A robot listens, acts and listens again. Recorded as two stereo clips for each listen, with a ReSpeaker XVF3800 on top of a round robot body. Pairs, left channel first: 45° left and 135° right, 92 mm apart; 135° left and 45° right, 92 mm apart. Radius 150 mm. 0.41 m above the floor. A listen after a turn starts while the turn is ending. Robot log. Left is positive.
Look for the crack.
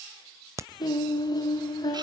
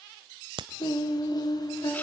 note: The crack: 75° right.
cmd yaw -75
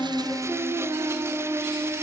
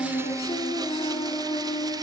end: Facing where the crack came from. I can't hear it now.